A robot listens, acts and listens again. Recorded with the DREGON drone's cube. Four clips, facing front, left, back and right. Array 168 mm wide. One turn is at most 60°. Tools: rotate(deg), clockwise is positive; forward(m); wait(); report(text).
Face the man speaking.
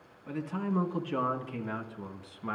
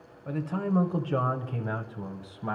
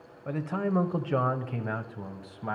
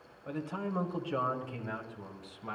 rotate(-60)
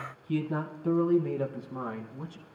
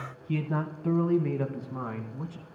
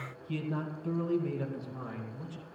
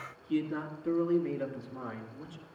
rotate(-55)
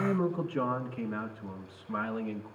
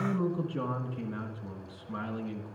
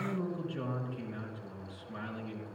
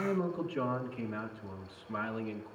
rotate(-15)
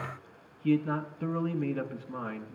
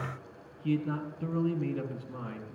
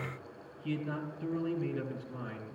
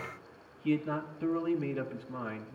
report("Found it: a man speaking, straight ahead, over 4 m away.")